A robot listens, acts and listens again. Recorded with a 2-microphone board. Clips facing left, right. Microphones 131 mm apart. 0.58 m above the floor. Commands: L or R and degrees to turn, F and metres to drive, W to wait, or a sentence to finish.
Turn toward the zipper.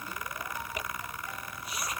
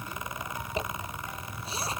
R30
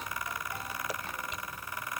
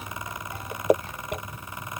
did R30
R120
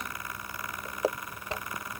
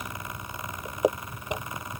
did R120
R15
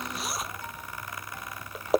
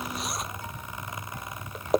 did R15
Facing the zipper.